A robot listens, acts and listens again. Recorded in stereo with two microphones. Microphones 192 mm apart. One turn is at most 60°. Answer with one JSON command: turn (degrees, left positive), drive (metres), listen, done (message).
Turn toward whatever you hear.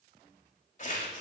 {"turn": 45}
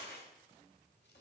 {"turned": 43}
{"turn": 60}
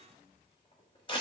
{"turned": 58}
{"turn": 30}
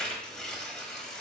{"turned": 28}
{"done": "Facing the tearing paper."}